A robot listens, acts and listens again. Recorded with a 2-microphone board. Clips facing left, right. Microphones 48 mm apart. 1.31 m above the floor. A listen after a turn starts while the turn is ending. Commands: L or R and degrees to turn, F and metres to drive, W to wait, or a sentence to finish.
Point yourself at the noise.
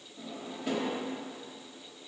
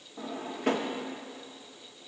R65
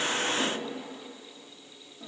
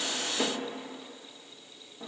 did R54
R35
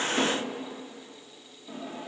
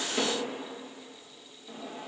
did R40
Found it: a drawer, straight ahead.